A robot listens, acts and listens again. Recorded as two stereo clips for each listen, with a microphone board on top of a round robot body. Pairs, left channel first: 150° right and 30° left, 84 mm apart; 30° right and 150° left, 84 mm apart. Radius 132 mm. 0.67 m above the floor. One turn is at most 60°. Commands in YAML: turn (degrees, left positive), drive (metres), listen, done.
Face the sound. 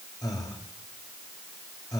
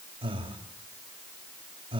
turn: 60
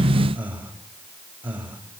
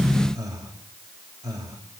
turn: 60
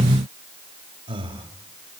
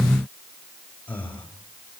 turn: 45
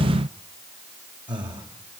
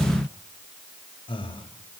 done: "Found it: breathing, straight ahead."